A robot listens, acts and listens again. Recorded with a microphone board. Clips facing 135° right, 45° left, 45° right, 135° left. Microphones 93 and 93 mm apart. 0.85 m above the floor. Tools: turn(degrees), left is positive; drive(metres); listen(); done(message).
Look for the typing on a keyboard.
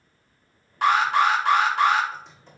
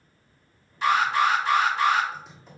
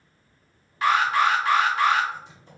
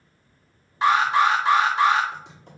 turn(degrees=130)
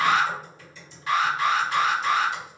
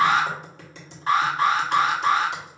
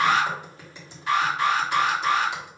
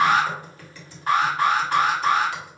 turn(degrees=25)
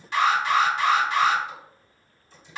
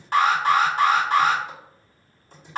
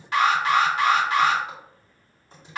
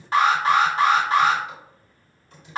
turn(degrees=10)
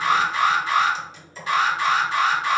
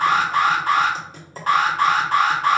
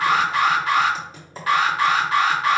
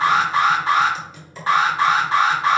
done("Found it: typing on a keyboard, straight ahead.")